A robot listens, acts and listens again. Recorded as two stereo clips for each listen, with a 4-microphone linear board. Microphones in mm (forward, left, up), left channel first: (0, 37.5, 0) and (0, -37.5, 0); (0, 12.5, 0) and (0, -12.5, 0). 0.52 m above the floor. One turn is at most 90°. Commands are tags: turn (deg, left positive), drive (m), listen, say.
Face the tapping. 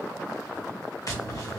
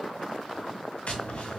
<turn deg="50"/>
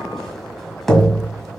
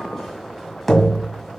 <say>Facing the tapping.</say>